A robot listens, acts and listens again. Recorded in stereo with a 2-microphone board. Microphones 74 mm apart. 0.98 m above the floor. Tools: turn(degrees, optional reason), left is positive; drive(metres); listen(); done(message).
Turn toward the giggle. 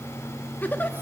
turn(degrees=25, reason="The giggle: about 25° left or 155° left.")
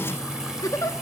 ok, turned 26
turn(degrees=130, reason="So it is at 130° left.")
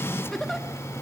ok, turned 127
done("Facing the giggle, 1 to 2 m away.")